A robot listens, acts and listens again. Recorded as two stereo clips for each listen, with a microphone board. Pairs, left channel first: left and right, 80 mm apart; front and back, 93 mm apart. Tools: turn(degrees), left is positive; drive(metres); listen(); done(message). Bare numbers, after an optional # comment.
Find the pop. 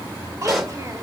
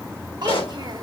done("Facing the pop.")